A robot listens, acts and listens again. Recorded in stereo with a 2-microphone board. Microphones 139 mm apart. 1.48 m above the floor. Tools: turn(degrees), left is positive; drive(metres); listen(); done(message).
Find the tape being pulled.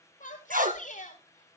turn(degrees=-90)
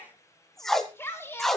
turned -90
done("Found it: tape being pulled, straight ahead, 1 to 2 m away.")